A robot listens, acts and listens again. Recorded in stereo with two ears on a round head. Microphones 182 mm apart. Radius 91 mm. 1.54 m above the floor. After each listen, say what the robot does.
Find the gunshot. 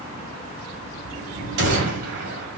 Turn 55° right.
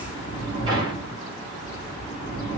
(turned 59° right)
Keep listening.
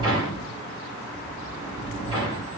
I heard a gunshot, but can't make it out now. It was about straight ahead or 65° right.